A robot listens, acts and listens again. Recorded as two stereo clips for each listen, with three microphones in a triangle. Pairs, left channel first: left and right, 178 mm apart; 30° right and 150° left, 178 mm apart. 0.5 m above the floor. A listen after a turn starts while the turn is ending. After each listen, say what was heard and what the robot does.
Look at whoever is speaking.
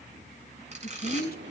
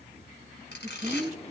The woman speaking: 105° left. Turn 105° left.
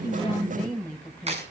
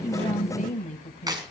Found it: a woman speaking, straight ahead.